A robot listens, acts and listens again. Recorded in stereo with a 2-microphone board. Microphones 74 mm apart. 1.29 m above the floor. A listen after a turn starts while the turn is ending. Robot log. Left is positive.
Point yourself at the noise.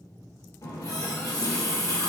note: The running tap: about 50° left or 130° left.
cmd yaw +50
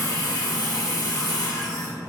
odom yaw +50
note: So it is at 75° left.
cmd yaw +75
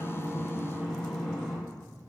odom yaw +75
end: Found it: a running tap, straight ahead, under 1 m away.